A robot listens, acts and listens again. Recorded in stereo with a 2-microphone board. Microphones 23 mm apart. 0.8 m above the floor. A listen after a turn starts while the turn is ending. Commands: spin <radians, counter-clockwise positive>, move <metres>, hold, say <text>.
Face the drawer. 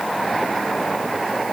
hold
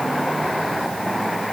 hold
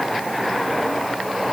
say I can't make out a drawer to turn to.